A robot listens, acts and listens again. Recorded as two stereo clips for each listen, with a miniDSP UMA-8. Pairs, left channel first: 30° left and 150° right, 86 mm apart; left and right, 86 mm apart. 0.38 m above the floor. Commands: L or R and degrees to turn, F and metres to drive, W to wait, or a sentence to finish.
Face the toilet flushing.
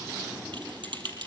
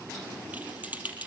W
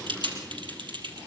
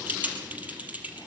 W
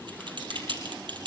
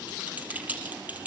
I can't make out a toilet flushing to turn to.